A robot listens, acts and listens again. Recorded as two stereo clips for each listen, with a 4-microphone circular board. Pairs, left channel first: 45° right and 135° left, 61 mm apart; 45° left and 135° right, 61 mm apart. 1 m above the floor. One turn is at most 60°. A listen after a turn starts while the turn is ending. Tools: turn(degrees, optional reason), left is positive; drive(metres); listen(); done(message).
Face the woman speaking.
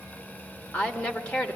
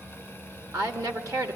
turn(degrees=-60, reason="The woman speaking: 115° right.")
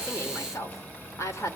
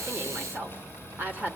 turn(degrees=-60, reason="The woman speaking is now 75° right.")
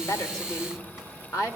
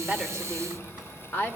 turn(degrees=-15, reason="The woman speaking is now 15° right.")
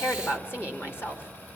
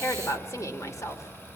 done("Facing the woman speaking, 2 to 4 m away.")